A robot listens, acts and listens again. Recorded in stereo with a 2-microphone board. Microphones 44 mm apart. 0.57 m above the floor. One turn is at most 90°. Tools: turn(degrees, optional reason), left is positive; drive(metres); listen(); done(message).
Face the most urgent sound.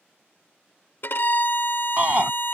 turn(degrees=-35, reason="The shout: about 35° right or 145° right.")
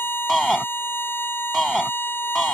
done("Facing the shout.")